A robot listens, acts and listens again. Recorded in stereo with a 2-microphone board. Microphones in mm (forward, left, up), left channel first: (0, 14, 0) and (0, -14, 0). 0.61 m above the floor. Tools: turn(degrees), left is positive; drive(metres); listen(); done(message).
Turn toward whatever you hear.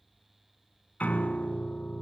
turn(degrees=70)
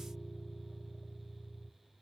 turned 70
turn(degrees=40)
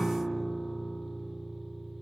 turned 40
done("Found it: a piano, straight ahead.")